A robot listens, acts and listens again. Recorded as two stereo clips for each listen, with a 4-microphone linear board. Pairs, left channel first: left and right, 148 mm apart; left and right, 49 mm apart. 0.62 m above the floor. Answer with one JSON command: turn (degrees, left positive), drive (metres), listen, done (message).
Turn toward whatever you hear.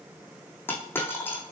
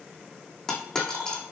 {"turn": 30}
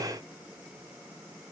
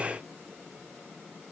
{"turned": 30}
{"listen": true}
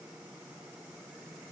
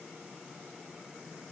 {"done": "I heard a dropped coin, but can't make it out now. It was about 15° right or 135° left."}